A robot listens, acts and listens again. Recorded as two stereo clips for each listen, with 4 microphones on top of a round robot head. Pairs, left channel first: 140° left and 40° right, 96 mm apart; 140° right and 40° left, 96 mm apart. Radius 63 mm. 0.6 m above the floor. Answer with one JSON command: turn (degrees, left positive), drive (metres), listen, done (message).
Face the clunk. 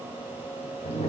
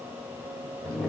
{"listen": true}
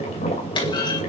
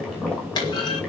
{"turn": 175}
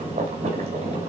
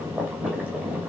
{"done": "Facing where the clunk came from. I can't hear it now."}